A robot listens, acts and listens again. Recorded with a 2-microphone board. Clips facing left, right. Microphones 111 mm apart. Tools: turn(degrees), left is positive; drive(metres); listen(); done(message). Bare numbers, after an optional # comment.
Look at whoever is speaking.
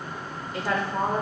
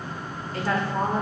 # The woman speaking: about 15° left or 165° left.
turn(15)
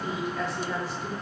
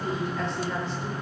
done("Found it: a woman speaking, straight ahead.")